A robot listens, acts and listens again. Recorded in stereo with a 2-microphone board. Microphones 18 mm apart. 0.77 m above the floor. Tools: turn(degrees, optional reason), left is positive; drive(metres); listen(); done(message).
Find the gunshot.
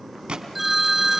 turn(degrees=-90)
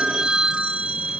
done("Facing where the gunshot came from. I can't hear it now.")